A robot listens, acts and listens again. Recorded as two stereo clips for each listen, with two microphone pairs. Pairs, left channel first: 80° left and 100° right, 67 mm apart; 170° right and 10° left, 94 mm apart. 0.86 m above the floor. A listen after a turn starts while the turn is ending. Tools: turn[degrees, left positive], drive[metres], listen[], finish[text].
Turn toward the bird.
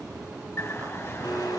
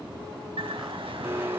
Thought: The bird: 30° left.
Action: turn[30]
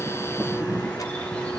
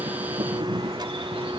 Thought: The bird is now 10° left.
Action: turn[10]
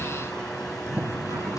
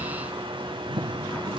Action: finish[Facing the bird, 2 to 4 m away.]